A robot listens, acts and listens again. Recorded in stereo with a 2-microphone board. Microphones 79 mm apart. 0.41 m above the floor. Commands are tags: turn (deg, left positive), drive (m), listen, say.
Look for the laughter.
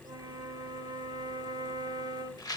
<listen/>
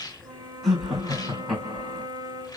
<turn deg="30"/>
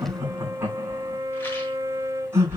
<turn deg="-30"/>
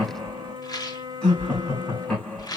<turn deg="15"/>
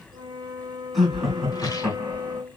<say>Found it: laughter, straight ahead, 2 to 4 m away.</say>